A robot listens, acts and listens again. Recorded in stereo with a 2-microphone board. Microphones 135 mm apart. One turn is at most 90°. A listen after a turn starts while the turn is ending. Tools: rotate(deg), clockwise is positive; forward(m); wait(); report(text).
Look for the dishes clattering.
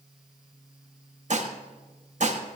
rotate(65)
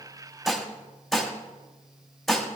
report("Found it: dishes clattering, straight ahead.")